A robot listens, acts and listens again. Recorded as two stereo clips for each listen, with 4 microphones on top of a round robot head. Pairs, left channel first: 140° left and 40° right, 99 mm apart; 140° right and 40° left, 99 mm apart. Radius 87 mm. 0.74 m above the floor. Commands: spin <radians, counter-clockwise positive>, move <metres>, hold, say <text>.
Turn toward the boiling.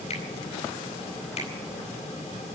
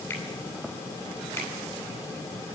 hold
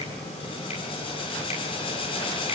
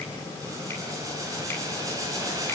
spin 1.75
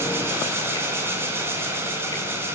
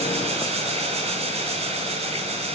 spin 0.44
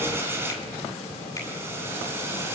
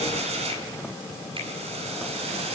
spin 0.44
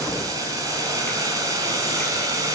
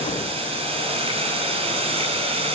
spin 0.26
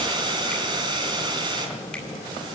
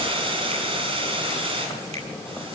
say Facing the boiling.